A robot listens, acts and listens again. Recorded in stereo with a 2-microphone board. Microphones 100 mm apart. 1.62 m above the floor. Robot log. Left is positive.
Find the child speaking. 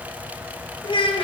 note: The child speaking: about 65° left or 115° left.
cmd yaw +65
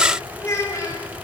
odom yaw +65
note: So it is at 35° left.
cmd yaw +35
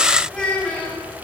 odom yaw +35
note: The child speaking is now 10° left.
cmd yaw +10
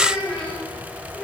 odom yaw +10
note: The child speaking is now 10° left.
cmd yaw +10
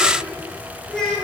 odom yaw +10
end: Found it: a child speaking, straight ahead.